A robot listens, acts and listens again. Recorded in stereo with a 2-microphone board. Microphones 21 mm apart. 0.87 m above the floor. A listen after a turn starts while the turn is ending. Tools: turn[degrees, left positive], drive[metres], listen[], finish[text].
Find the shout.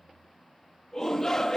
Thought: The shout: about 25° left or 155° left.
Action: turn[25]
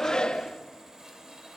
Thought: So it is at 125° left.
Action: turn[125]
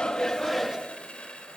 Action: finish[Facing the shout.]